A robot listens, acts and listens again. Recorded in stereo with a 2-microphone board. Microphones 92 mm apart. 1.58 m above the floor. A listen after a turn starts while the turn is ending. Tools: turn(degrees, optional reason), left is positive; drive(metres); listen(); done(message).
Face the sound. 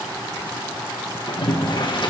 turn(degrees=55, reason="The boiling: about 55° left or 125° left.")
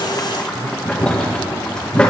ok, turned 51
turn(degrees=10, reason="So it is at 10° left.")
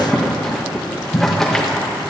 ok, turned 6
done("Facing the boiling.")